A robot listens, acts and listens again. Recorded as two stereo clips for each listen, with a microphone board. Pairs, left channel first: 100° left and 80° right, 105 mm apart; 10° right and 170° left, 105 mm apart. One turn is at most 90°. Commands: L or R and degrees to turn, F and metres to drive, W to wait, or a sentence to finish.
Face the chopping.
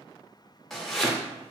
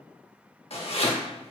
L15
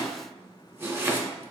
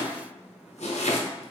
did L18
Facing the chopping, under 1 m away.